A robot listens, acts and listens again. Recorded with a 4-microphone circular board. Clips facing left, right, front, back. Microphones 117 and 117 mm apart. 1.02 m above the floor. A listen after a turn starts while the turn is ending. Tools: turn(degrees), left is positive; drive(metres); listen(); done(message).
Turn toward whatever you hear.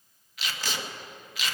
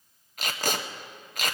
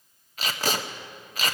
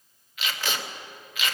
turn(degrees=-50)
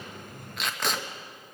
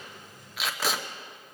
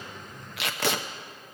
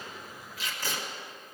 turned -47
done("Facing the tape being pulled.")